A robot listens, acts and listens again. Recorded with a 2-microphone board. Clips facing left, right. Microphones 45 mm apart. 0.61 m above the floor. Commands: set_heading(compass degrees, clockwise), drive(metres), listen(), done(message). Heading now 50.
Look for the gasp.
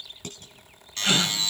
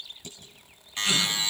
set_heading(5)
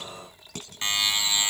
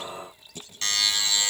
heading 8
listen()
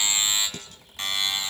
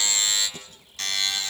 done("I heard a gasp, but can't make it out now. It was about 5° left or 95° left.")